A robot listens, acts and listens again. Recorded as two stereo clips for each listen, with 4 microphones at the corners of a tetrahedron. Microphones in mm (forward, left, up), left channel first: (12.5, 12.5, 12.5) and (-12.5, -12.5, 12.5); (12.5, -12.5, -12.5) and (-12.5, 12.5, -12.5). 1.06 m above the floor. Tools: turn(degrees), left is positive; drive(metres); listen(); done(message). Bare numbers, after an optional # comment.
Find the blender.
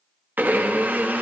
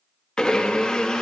# The blender: 115° right.
turn(-115)
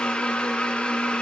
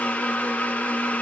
# The blender is now 10° right.
turn(-10)
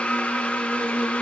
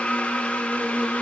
done("Facing the blender, under 1 m away.")